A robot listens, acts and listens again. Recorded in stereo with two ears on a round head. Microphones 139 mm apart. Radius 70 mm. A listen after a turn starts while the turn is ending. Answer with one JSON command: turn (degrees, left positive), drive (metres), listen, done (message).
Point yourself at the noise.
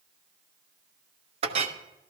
{"turn": -40}
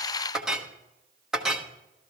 {"done": "Facing the clink."}